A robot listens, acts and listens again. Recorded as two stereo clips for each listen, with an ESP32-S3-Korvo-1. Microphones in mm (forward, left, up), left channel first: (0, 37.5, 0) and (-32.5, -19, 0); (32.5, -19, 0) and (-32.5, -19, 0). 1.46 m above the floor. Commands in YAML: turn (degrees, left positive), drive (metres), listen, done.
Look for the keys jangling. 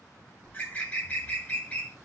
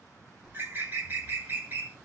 listen: true
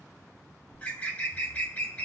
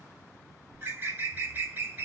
listen: true
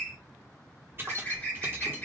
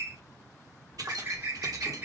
turn: -170
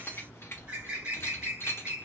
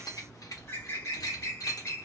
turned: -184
turn: 10
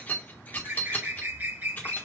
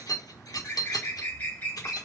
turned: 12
done: "Facing the keys jangling."